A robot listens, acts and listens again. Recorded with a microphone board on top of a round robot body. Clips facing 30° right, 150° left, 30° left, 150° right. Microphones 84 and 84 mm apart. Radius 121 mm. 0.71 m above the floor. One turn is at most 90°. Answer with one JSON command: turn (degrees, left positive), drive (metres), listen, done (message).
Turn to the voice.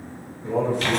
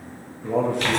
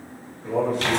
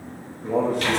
{"turn": 90}
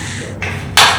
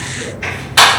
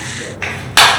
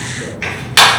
{"turn": 80}
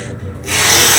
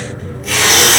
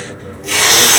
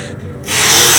{"listen": true}
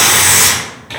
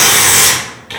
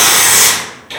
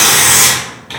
{"done": "Facing where the man speaking came from. I can't hear it now."}